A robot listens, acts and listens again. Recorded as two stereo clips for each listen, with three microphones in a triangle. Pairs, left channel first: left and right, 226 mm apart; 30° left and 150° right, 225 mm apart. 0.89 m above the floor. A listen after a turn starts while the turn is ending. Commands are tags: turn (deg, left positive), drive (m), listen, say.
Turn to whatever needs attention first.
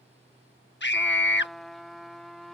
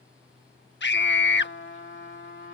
<turn deg="60"/>
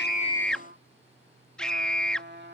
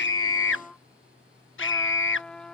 <say>Found it: a scream, straight ahead.</say>